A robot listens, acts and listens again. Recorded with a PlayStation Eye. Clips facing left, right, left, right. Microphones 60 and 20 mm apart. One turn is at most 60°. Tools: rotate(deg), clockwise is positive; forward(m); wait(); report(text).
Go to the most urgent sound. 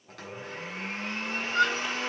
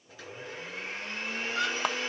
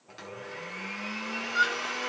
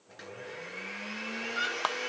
rotate(-55)
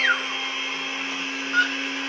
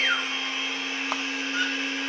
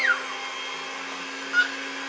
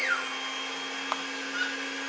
rotate(-60)
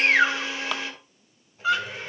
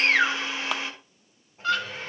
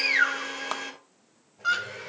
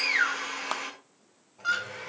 rotate(-10)
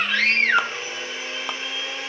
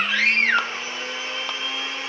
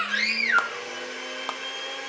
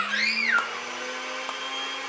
forward(1.0)
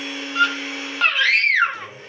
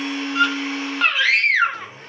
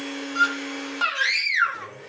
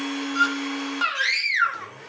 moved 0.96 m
forward(1.0)
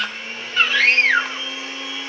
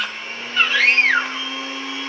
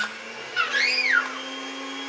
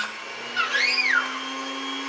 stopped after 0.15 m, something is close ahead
report("I am next to the scream.")